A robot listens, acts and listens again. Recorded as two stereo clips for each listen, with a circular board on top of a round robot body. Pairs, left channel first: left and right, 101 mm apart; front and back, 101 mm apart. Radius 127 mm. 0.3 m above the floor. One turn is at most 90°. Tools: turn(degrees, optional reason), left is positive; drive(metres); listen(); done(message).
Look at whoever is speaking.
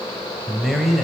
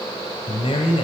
done("Found it: a man speaking, straight ahead.")